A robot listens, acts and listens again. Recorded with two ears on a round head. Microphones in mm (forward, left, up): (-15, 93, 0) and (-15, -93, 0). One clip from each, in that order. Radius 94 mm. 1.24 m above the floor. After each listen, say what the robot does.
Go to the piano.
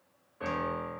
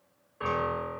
Turn 20° right.
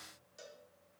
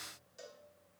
Keep listening.
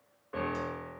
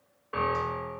Turn 140° right.
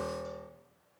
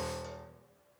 Turn 20° right.
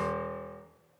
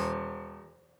Drive 1.0 m forward.
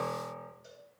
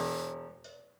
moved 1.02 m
Turn 10° right.
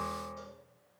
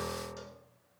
Drive 1.0 m forward.
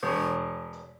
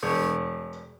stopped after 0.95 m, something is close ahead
Turn 15° right.
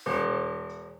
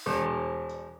Arrived at the piano, straight ahead.